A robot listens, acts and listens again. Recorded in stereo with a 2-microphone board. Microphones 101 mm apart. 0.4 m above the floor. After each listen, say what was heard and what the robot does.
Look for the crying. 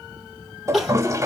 Turn 30° left.
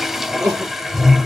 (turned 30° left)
So it is at 30° right. Turn 30° right.
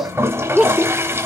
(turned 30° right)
Facing the crying, 2 to 4 m away.